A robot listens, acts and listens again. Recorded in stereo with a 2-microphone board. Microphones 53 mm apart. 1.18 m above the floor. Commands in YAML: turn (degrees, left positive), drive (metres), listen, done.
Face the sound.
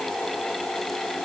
listen: true
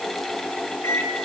turn: 55
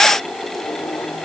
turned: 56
listen: true
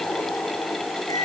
turn: 75
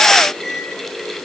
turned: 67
done: "Facing the microwave."